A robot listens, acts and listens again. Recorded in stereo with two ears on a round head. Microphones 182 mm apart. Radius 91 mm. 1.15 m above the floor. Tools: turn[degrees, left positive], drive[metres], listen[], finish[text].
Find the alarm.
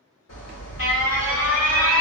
Thought: The alarm: about 65° left or 115° left.
Action: turn[65]
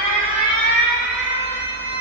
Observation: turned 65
Thought: So it is at 45° left.
Action: turn[45]
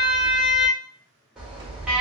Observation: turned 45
Action: finish[Facing the alarm.]